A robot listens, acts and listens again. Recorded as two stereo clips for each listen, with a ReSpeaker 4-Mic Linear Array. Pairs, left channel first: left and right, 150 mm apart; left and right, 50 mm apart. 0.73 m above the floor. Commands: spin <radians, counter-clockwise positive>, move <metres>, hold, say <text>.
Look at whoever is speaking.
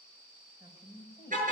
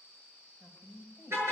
spin -0.61
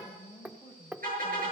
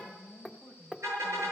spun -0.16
spin -0.61
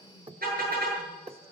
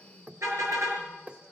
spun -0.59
hold
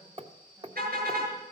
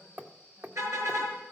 hold
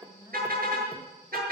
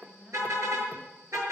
spin -0.44
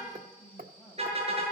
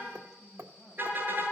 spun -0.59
say Facing the woman speaking, over 4 m away.